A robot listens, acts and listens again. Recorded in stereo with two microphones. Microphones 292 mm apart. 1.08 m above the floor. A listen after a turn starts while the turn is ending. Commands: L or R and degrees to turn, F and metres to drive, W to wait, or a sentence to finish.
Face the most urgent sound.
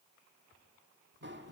W
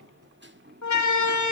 L65
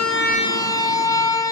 L10
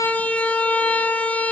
Facing the siren, 2 to 4 m away.